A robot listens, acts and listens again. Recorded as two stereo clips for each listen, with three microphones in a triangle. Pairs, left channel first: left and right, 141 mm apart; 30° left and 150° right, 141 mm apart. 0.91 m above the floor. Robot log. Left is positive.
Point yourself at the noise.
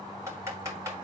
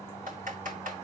note: The typing on a keyboard: 155° right.
cmd yaw -155
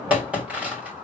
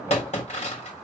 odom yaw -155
note: The typing on a keyboard is now 10° right.
cmd yaw -10
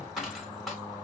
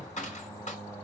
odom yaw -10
end: Found it: typing on a keyboard, straight ahead, 2 to 4 m away.